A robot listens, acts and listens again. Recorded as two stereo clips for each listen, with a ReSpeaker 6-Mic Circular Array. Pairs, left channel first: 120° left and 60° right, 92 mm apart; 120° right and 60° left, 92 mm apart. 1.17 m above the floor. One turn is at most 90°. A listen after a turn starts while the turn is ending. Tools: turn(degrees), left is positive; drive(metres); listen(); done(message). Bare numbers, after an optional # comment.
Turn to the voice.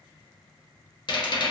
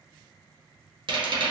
listen()
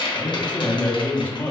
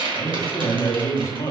# The man speaking: 170° right.
turn(-90)
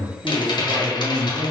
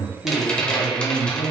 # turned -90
# The man speaking is now 95° right.
turn(-90)
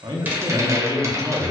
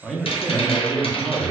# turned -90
# The man speaking is now 10° right.
turn(-10)
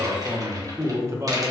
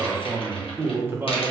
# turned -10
done("Found it: a man speaking, straight ahead.")